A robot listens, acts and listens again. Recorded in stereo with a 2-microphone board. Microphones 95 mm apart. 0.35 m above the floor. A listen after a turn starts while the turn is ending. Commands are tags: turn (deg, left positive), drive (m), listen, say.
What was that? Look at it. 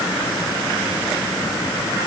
<listen/>
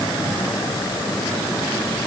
<listen/>
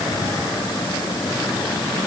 <say>I can't make out anything.</say>